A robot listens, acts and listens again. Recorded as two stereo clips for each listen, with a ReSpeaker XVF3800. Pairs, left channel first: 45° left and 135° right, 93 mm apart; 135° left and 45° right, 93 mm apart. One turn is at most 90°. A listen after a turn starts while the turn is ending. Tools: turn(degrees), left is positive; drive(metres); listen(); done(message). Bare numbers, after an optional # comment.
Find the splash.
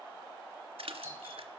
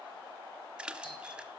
# The splash: 125° right.
turn(-90)
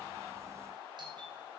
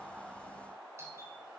# Nothing new. It was at 35° right.
turn(-35)
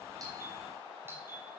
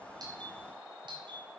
done("I heard a splash from this way, but can't make it out now.")